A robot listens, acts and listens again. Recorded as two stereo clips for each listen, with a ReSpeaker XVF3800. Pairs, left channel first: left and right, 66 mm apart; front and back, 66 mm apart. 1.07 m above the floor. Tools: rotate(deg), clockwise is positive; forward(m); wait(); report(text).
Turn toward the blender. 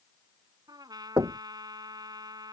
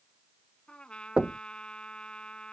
wait()
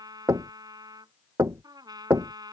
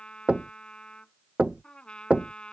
wait()
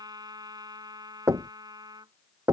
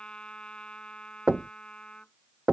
report("I can't make out a blender, only knocking and a trumpet.")